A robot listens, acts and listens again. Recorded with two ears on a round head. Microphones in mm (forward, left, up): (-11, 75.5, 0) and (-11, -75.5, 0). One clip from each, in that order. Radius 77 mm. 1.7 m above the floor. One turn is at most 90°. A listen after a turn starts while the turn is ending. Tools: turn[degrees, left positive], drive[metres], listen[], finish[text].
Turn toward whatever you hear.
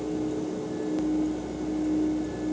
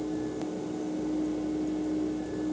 Action: listen[]
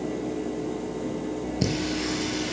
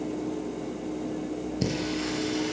Action: turn[30]
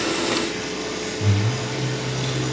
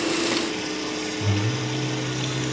Thought: So it is at 20° right.
Action: turn[-20]
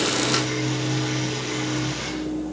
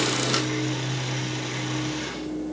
Action: finish[Found it: singing, straight ahead, over 4 m away.]